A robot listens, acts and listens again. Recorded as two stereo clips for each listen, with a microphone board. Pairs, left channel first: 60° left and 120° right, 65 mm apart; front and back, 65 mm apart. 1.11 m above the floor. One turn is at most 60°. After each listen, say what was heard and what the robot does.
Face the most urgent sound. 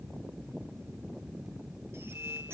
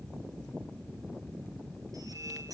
Keep listening.
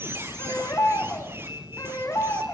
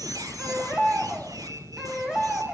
The baby crying: 100° left. Turn 60° left.
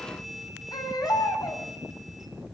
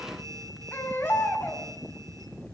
The baby crying is now 60° left. Turn 60° left.
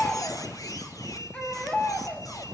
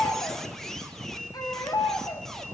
The baby crying is now 10° right. Turn 10° right.
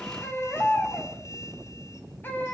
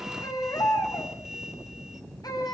Found it: a baby crying, straight ahead, over 4 m away.